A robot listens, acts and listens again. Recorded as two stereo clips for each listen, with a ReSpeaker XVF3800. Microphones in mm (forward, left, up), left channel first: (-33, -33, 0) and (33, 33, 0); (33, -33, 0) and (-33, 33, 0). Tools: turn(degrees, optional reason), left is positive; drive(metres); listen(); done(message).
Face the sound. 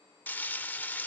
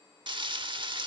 turn(degrees=155, reason="The frying: 155° left.")
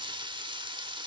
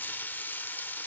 turn(degrees=25, reason="The frying is now 25° left.")
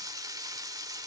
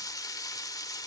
done("Found it: frying, straight ahead, 1 to 2 m away.")